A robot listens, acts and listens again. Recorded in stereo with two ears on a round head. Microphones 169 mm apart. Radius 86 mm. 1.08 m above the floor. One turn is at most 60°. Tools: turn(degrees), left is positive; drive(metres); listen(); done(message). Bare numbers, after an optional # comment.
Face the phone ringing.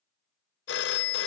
# The phone ringing: about 60° left or 120° left.
turn(60)
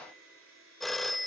done("Found it: a phone ringing, straight ahead.")